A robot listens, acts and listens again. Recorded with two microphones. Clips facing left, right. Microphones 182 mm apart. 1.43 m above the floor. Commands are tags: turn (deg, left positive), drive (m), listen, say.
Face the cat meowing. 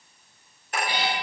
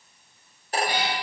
<turn deg="-50"/>
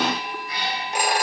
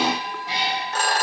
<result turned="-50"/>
<turn deg="-85"/>
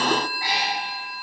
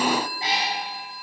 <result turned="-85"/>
<turn deg="-25"/>
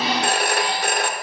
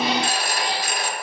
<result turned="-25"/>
<listen/>
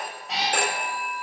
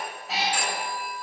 <say>Found it: a cat meowing, straight ahead.</say>